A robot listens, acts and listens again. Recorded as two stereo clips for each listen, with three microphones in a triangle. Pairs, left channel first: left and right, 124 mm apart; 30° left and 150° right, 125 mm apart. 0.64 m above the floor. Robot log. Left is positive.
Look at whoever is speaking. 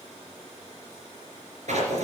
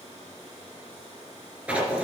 cmd idle
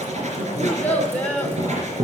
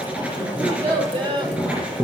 note: The child speaking: 165° left.
cmd yaw +165
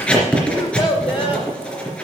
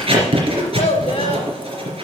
note: The child speaking is now 45° left.
cmd yaw +45
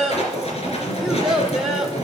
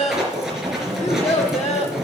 end: Facing the child speaking.